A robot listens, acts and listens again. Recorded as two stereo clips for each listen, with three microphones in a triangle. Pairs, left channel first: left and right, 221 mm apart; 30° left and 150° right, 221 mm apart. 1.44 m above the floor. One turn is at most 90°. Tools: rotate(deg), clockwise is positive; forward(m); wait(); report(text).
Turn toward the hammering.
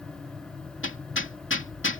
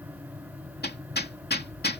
rotate(-70)
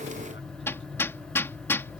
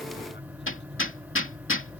rotate(-10)
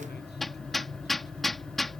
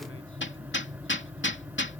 report("Found it: hammering, straight ahead.")